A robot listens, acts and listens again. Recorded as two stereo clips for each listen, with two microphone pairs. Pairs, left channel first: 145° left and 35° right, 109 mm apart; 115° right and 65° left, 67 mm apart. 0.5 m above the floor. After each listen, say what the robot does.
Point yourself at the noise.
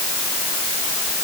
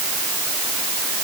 Keep listening.
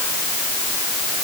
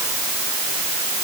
Keep listening.
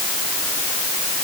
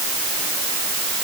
I can't make out anything.